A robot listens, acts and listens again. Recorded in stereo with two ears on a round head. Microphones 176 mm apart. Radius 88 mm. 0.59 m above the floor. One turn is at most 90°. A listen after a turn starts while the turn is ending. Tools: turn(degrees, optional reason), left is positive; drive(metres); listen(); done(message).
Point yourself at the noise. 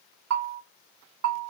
turn(degrees=-90)
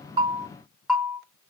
done("Facing the bell, under 1 m away.")